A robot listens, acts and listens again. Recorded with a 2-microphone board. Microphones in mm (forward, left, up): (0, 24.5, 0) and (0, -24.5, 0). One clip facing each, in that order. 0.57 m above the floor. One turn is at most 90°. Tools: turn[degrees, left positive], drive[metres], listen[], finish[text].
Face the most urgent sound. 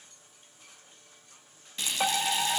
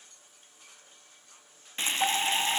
Thought: The fire alarm: about 45° left or 135° left.
Action: turn[45]
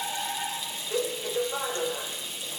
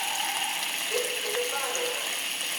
Action: finish[Facing the fire alarm.]